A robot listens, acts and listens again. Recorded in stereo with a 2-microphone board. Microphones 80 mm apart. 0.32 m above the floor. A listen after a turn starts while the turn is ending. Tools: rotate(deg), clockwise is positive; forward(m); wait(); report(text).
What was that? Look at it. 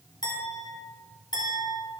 rotate(-60)
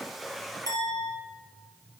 rotate(-60)
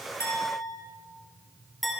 report("Facing the clink.")